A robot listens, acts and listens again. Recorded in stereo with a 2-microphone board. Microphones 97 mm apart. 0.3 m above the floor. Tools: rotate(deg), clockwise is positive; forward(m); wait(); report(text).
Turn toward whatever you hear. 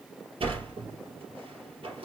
rotate(75)
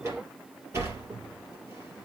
rotate(30)
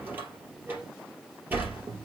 rotate(20)
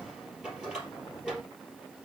rotate(10)
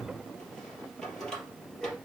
report("Facing the sliding door.")